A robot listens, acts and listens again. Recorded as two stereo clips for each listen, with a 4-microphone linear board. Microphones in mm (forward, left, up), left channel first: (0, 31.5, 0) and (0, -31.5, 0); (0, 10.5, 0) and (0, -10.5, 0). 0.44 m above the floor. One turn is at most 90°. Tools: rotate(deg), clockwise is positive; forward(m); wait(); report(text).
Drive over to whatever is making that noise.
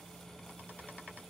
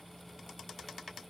wait()
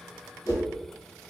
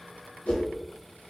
rotate(-90)
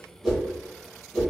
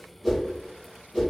forward(1.0)
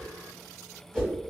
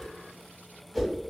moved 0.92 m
rotate(-10)
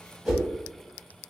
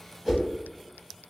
forward(1.0)
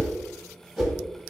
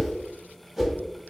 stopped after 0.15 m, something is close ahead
report("Arrived at the whoosh, straight ahead.")